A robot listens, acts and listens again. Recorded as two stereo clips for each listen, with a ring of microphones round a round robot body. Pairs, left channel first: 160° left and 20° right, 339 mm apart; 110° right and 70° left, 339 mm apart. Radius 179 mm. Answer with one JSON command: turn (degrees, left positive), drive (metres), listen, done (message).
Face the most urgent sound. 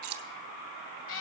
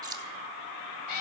{"listen": true}
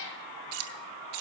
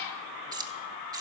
{"listen": true}
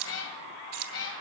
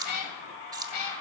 {"done": "I can't make out anything urgent to turn to."}